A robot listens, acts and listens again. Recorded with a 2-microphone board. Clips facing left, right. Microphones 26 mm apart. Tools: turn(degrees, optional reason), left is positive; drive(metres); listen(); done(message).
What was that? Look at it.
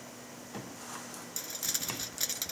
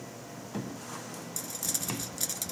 turn(degrees=30)
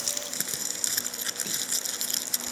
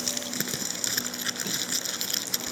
turn(degrees=-15, reason="So it is at 15° right.")
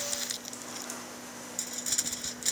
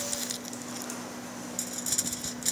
done("Found it: crumpling, straight ahead.")